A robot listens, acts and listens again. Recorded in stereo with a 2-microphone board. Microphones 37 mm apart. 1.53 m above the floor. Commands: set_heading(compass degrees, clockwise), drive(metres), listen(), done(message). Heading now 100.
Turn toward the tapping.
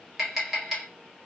set_heading(130)
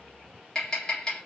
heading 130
set_heading(110)
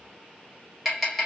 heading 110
done("Facing the tapping.")